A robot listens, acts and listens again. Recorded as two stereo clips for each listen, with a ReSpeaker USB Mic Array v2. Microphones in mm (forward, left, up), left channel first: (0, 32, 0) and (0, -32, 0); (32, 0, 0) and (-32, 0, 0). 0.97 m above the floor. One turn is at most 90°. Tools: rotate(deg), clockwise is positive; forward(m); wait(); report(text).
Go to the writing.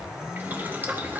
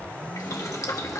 wait()
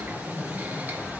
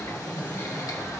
wait()
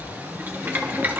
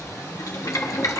report("I can't make out writing to turn to.")